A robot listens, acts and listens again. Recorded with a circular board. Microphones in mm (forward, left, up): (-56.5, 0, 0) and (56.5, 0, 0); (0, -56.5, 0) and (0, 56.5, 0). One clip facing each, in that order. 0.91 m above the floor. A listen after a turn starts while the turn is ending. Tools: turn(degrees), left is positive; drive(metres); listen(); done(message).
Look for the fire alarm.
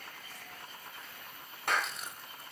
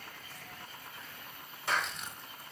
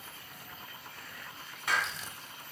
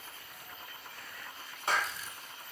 listen()
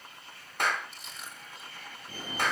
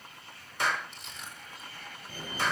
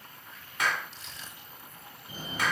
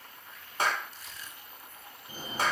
turn(degrees=180)
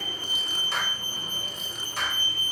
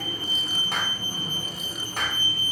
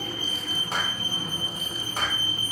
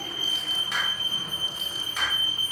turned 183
done("Facing the fire alarm, 2 to 4 m away.")